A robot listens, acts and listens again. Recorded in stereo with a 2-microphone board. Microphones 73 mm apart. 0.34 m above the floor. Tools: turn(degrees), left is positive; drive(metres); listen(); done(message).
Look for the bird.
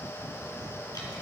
listen()
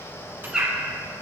turn(degrees=-30)
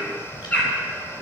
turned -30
turn(degrees=20)
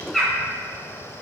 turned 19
done("Found it: a bird, straight ahead.")